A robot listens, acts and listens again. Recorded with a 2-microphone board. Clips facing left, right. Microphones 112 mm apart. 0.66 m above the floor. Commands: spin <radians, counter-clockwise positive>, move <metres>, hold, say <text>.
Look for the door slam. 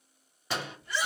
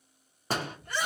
spin -0.79
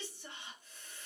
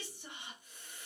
hold
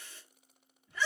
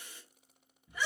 say I heard a door slam, but can't make it out now. It was about straight ahead or 90° right.